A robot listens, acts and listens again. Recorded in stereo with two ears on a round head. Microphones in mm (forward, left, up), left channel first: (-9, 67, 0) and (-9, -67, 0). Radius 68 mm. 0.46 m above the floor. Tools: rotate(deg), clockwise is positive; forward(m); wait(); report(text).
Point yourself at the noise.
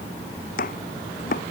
rotate(-65)
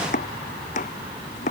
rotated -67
rotate(-50)
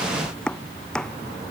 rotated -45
report("Found it: chopping, straight ahead.")